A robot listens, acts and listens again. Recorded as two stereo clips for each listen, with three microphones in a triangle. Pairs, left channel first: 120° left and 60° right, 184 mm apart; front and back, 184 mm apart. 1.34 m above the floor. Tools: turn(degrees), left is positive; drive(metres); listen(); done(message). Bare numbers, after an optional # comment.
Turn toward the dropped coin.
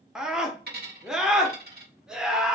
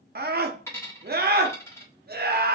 # The dropped coin: 75° right.
turn(-75)
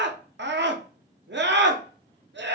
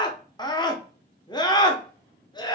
done("I heard a dropped coin from this way, but can't make it out now.")